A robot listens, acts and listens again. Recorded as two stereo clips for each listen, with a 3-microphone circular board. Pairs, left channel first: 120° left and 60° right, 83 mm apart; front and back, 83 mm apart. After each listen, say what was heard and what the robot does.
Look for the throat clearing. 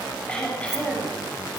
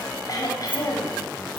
The throat clearing: 45° left. Turn 45° left.
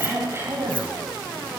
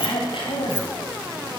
Facing the throat clearing.